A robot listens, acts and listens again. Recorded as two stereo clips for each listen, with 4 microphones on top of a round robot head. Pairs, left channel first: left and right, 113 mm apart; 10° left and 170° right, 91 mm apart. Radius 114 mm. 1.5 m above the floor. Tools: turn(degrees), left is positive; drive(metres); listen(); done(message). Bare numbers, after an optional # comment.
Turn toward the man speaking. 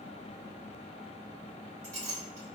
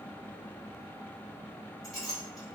listen()
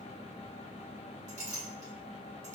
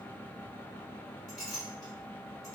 listen()
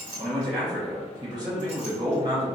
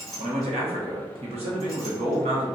# The man speaking: 155° right.
turn(-155)
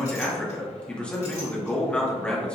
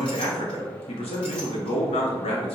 # The man speaking is now 10° left.
turn(10)
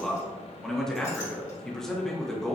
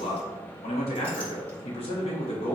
done("Facing the man speaking.")